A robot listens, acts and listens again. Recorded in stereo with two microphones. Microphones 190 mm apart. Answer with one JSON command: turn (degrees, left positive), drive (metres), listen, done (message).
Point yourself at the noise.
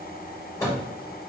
{"turn": 15}
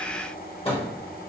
{"turn": 150}
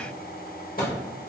{"turn": 50}
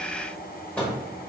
{"turn": 10}
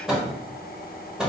{"done": "Facing the microwave, 1 to 2 m away."}